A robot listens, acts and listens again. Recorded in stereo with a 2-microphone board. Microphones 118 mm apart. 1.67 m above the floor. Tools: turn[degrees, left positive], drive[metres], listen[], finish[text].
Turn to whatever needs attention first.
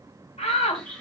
Action: turn[90]
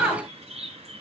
Thought: So it is at 15° right.
Action: turn[-15]
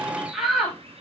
Action: finish[Facing the shout.]